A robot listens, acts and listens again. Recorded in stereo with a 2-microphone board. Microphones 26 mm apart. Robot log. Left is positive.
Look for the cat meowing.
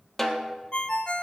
cmd idle
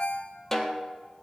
cmd idle
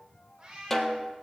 note: The cat meowing: about 25° right or 155° right.
cmd yaw -25
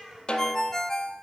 end: Facing the cat meowing.